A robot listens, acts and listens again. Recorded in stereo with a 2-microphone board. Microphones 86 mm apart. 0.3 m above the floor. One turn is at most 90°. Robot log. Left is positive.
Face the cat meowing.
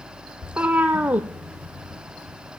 note: The cat meowing: about 20° right or 160° right.
cmd yaw -20
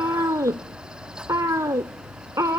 note: So it is at 140° right.
cmd yaw -90
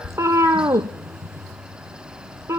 note: The cat meowing is now 35° right.
cmd yaw -35
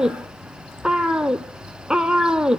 note: The cat meowing is now 10° right.
cmd yaw -10
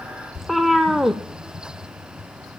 end: Found it: a cat meowing, straight ahead, under 1 m away.